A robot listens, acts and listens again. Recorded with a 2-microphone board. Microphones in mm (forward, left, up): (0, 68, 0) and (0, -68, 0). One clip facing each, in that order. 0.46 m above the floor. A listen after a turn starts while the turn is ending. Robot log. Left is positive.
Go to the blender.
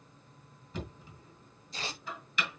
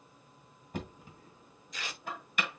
cmd idle
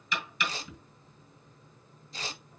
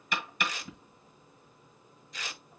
cmd idle
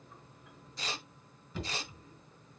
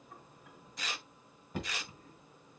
end: I can't make out a blender, only tearing paper and knocking.